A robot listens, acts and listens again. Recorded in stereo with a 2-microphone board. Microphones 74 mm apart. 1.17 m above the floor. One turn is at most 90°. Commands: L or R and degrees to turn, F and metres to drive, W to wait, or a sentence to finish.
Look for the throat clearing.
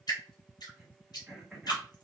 L30
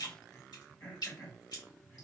L90
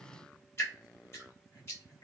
L90
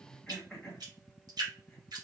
Facing the throat clearing, 1 to 2 m away.